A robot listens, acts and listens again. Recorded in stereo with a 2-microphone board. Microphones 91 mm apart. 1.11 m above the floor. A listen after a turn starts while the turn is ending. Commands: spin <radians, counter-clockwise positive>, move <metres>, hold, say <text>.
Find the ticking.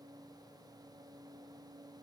hold
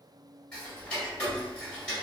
spin 0.52
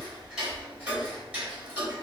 spin -0.26
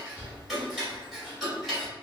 say Facing the ticking.